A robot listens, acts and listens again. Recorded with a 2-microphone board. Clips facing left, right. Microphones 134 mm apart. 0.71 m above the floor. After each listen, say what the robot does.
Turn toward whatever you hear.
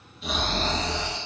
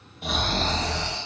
Turn 60° right.
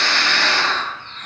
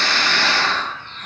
Turn 10° right.
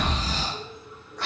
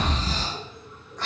Found it: snoring, straight ahead.